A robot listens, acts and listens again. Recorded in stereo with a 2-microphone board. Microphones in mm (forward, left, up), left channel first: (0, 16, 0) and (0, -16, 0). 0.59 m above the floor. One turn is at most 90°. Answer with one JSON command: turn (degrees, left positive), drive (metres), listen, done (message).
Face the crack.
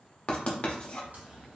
{"turn": -65}
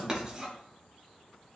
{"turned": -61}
{"listen": true}
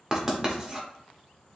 {"done": "I heard a crack, but can't make it out now. It was about 5° right or 55° right."}